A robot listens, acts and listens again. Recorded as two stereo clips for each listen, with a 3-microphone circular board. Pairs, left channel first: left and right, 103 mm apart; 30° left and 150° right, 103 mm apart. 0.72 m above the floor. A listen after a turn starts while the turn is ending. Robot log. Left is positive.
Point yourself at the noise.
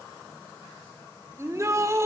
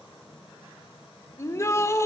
note: The shout: 30° right.
cmd yaw -30
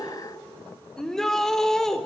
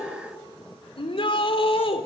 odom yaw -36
end: Facing the shout.